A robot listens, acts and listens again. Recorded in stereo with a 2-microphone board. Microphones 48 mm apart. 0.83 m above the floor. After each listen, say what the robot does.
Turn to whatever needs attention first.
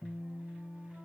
Keep listening.
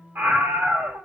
Turn 55° right.
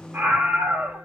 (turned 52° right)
Turn 55° right.
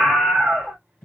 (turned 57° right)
Facing the scream.